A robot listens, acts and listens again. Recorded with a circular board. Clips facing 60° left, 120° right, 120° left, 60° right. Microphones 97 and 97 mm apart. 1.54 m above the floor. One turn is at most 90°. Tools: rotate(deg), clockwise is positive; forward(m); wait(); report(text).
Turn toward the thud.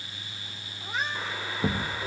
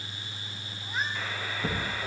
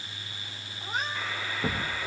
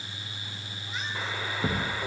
rotate(-30)
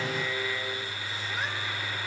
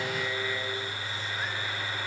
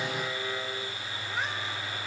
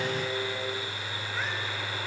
report("I heard a thud from this way, but can't make it out now.")